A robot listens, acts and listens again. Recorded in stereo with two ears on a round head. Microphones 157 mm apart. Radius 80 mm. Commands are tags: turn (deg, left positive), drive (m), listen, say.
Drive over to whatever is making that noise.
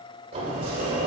<turn deg="-35"/>
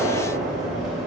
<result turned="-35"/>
<drive m="1.0"/>
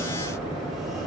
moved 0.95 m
<drive m="1.0"/>
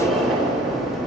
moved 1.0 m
<drive m="1.0"/>
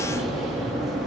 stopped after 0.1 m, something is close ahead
<say>Arrived at the sliding door, straight ahead.</say>